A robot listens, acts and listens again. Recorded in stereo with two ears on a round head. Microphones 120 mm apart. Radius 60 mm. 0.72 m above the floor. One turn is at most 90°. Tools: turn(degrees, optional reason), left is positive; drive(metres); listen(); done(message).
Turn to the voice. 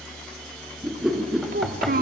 turn(degrees=-70, reason="The child speaking: about 70° right or 110° right.")
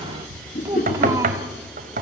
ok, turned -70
turn(degrees=-25, reason="So it is at 25° right.")
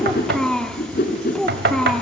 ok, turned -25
done("Facing the child speaking, 1 to 2 m away.")